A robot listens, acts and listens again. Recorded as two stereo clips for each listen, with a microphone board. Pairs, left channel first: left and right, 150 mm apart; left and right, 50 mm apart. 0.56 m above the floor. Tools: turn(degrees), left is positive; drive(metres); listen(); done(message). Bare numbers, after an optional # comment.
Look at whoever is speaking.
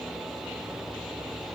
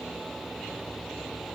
listen()
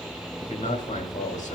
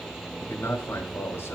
# The man speaking: about 50° left or 130° left.
turn(50)
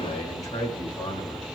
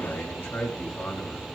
# So it is at 65° left.
turn(65)
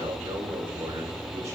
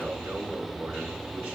# The man speaking is now 20° right.
turn(-20)
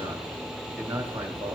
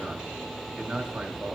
# The man speaking is now 10° right.
turn(-10)
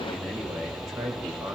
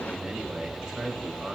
done("Found it: a man speaking, straight ahead, 2 to 4 m away.")